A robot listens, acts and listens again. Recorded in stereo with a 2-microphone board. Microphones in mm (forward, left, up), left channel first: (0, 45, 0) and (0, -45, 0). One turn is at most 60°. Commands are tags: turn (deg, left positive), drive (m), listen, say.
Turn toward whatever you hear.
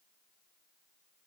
<listen/>
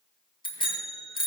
<turn deg="60"/>
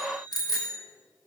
<turn deg="45"/>
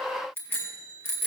<turn deg="25"/>
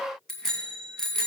<say>Found it: a bicycle bell, straight ahead, 2 to 4 m away.</say>